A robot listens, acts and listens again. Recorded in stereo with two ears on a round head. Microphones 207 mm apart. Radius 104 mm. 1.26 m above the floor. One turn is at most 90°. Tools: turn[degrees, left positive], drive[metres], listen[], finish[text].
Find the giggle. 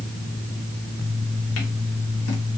Action: listen[]
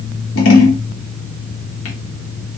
Action: listen[]
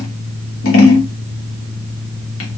Action: finish[I can't make out a giggle to turn to.]